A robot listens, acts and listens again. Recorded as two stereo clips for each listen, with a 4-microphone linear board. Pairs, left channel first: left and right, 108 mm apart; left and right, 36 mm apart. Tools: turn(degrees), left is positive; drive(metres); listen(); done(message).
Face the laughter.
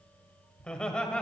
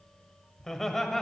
turn(degrees=30)
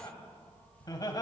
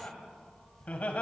turn(degrees=140)
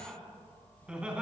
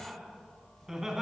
turn(degrees=-10)
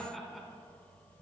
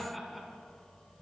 done("Found it: laughter, straight ahead, 2 to 4 m away.")